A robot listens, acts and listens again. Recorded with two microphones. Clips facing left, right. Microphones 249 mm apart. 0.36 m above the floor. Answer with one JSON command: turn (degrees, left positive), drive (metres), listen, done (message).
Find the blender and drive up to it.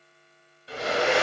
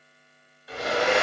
{"turn": 30}
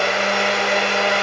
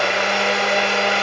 {"drive": 1.0}
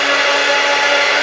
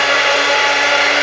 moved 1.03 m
{"turn": 25}
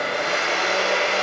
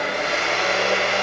{"drive": 1.0}
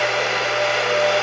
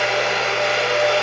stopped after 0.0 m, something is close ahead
{"done": "I am next to the blender."}